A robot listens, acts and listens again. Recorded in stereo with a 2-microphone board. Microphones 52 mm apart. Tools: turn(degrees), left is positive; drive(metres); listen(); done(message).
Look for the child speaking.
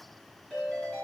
listen()
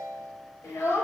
turn(degrees=60)
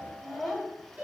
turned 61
done("Found it: a child speaking, straight ahead.")